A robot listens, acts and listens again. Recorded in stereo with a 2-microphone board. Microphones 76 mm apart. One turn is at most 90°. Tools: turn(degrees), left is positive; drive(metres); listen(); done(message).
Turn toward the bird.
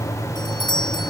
listen()
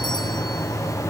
listen()
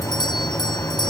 done("I can't make out a bird, only a doorbell.")